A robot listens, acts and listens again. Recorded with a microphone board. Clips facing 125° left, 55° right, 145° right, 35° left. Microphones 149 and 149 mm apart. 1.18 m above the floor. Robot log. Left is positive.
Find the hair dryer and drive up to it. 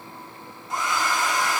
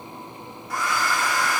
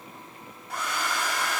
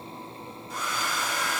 note: The hair dryer: 170° right.
cmd yaw -170
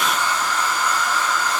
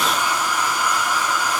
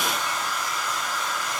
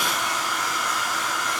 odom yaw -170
note: The hair dryer is now 20° left.
cmd yaw +20
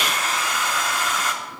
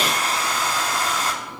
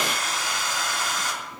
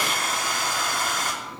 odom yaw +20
cmd fwd 1.0
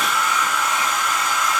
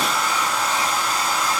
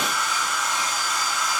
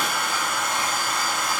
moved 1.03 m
cmd fwd 1.0
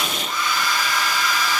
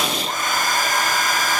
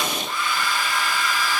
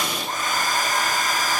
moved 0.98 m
note: The hair dryer is now 10° right.
cmd yaw -10
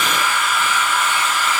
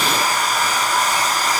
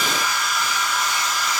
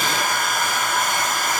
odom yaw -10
cmd fwd 1.0
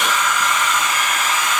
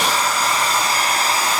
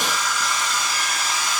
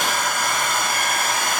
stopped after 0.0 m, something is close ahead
end: Arrived at the hair dryer, straight ahead.